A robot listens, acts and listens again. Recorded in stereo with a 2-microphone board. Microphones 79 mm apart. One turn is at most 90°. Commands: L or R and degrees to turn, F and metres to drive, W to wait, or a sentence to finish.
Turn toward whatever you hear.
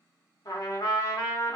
L50
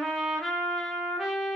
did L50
Found it: a trumpet, straight ahead, under 1 m away.